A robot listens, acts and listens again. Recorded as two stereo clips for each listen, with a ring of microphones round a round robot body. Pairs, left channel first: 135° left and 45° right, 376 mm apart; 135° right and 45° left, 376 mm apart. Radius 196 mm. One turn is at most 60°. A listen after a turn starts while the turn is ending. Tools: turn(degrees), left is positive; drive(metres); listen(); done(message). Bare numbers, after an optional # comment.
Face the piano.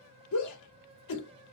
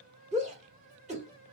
listen()
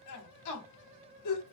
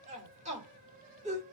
listen()
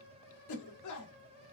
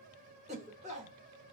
done("I can't make out a piano to turn to.")